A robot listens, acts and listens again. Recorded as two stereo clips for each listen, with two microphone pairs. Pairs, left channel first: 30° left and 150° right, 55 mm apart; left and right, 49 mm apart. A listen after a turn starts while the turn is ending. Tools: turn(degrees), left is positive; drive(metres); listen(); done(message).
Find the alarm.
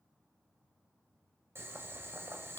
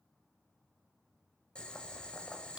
listen()
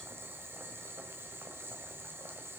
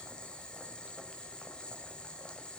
listen()
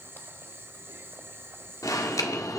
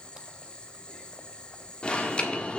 turn(degrees=20)
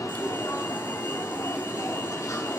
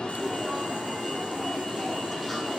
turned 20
done("Facing the alarm, 1 to 2 m away.")